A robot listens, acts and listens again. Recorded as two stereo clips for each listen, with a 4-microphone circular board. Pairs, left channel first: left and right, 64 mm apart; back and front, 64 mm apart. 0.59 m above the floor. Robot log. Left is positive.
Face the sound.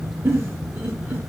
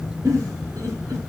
note: The giggle: 30° right.
cmd yaw -30
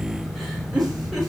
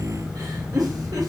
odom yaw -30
end: Facing the giggle, 1 to 2 m away.